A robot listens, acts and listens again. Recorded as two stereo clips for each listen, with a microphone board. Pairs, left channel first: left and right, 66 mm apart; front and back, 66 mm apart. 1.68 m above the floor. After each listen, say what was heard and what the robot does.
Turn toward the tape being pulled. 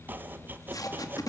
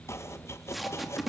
The tape being pulled: 90° left. Turn 90° left.
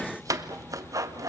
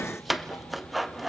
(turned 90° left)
Keep listening.
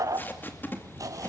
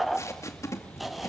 The tape being pulled is now 35° left. Turn 35° left.
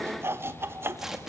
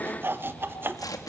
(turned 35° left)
Found it: tape being pulled, straight ahead.